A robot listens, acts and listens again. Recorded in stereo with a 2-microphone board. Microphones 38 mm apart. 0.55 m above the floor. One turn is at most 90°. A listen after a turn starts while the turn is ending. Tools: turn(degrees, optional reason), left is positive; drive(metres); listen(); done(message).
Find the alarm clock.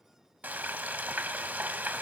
listen()
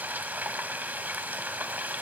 listen()
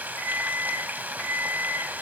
turn(degrees=90)
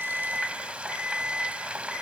done("Found it: an alarm clock, straight ahead.")